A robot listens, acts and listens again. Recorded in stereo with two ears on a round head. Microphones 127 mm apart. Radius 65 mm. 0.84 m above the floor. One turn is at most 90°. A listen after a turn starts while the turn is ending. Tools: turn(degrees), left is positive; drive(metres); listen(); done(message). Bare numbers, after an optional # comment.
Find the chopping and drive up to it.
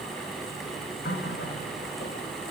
listen()
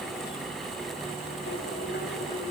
listen()
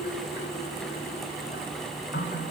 done("I can't make out chopping, only a running tap.")